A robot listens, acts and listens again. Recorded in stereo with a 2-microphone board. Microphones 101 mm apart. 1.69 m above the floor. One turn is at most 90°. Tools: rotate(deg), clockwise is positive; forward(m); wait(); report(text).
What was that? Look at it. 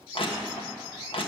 rotate(-65)
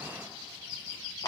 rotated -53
rotate(-45)
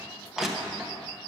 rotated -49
report("Facing the crushing, 1 to 2 m away.")